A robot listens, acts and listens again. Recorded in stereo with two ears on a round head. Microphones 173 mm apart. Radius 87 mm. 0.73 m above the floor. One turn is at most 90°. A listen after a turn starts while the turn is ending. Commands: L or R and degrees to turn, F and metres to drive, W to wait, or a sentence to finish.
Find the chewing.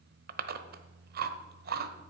R50
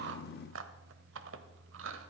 R75
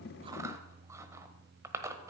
R15
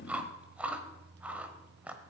Facing the chewing, 1 to 2 m away.